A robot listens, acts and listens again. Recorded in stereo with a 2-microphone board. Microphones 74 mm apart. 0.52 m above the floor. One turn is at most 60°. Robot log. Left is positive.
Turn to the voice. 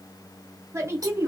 note: The woman speaking: about 40° right or 140° right.
cmd yaw -40
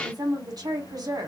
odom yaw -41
note: So it is at 90° right.
cmd yaw -60
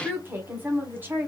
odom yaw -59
note: The woman speaking is now 30° right.
cmd yaw -30
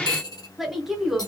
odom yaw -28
end: Found it: a woman speaking, straight ahead.